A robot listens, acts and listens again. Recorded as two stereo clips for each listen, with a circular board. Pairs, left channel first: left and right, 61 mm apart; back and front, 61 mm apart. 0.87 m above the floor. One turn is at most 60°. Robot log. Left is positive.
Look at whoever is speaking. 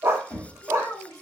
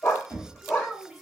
note: The child speaking: 90° left.
cmd yaw +60
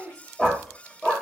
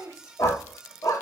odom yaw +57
note: The child speaking is now 30° left.
cmd yaw +30
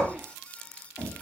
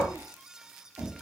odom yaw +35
cmd idle
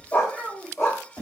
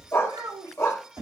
end: Facing the child speaking, 1 to 2 m away.